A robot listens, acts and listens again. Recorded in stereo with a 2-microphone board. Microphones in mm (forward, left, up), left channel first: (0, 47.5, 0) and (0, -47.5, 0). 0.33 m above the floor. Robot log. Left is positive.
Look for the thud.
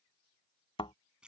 note: The thud: about 75° left or 105° left.
cmd yaw +75
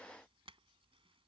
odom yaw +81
cmd idle
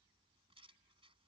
end: I heard a thud, but can't make it out now. It was about 5° right or 25° left.